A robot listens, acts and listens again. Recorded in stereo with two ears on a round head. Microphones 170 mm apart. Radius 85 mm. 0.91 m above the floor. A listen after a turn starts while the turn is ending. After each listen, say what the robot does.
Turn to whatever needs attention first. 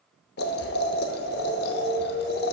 Turn 35° left.
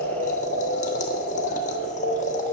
Turn 105° left.
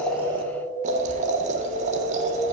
Turn 10° left.
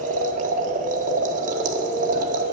Keep listening.
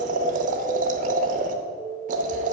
Facing the alarm, 1 to 2 m away.